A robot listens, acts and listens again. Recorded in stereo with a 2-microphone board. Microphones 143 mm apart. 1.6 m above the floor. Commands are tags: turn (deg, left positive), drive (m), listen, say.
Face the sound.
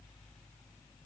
<listen/>
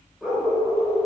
<turn deg="-30"/>
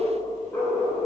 <turn deg="10"/>
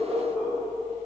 <turn deg="-10"/>
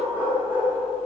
<turn deg="-15"/>
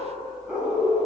<say>Found it: a dog barking, straight ahead, over 4 m away.</say>